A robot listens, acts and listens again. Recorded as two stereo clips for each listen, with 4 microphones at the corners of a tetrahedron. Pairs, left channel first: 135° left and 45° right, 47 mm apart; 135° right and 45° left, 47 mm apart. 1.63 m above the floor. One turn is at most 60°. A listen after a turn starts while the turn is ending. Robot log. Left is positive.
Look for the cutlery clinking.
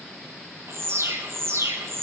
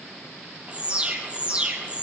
cmd idle
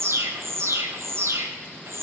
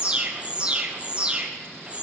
cmd idle
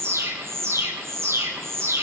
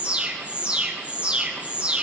end: I can't make out cutlery clinking to turn to.